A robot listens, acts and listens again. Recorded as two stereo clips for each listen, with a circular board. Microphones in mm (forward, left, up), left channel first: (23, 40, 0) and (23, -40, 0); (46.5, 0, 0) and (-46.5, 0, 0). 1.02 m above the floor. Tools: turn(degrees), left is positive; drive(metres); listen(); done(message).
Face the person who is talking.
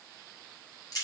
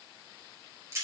listen()
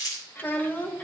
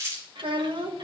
turn(degrees=155)
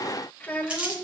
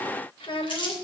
turn(degrees=20)
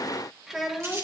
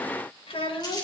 done("Found it: a child speaking, straight ahead, 1 to 2 m away.")